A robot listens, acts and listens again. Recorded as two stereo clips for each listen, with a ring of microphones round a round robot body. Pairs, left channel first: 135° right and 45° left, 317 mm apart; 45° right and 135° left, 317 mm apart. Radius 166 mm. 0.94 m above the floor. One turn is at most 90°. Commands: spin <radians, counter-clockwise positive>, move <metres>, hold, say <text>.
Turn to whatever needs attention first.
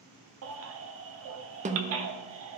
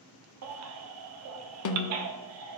spin 1.57
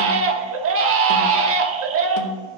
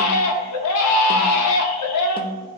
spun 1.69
say Facing the baby crying, under 1 m away.